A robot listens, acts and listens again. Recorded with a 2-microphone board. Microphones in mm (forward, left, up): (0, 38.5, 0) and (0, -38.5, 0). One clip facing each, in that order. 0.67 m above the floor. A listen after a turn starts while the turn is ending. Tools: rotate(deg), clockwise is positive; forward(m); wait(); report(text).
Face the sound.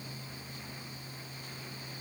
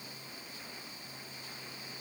wait()
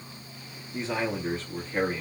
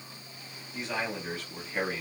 rotate(-20)
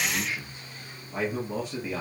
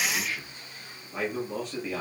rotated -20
rotate(-30)
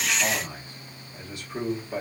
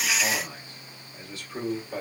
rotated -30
rotate(-15)
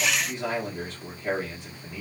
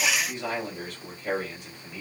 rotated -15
rotate(-25)
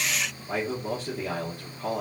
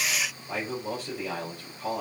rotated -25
rotate(-140)
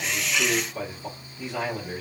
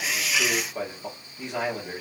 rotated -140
rotate(20)
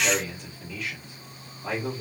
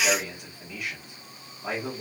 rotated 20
rotate(10)
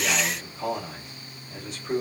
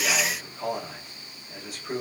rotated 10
report("Found it: a man speaking, straight ahead, 1 to 2 m away.")